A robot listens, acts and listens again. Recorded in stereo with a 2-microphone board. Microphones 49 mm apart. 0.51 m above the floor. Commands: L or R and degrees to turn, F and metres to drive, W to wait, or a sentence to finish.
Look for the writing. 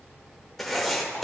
L30
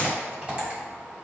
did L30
W
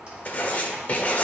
L145
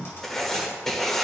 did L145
L10
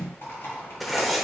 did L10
Facing the writing, 1 to 2 m away.